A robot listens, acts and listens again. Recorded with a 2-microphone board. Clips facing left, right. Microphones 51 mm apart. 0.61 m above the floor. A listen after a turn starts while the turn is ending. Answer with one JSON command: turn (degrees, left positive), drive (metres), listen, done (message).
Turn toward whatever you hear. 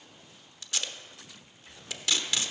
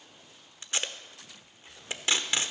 {"turn": -30}
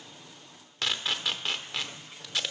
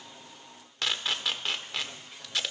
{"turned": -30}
{"done": "Facing the tape being pulled, under 1 m away."}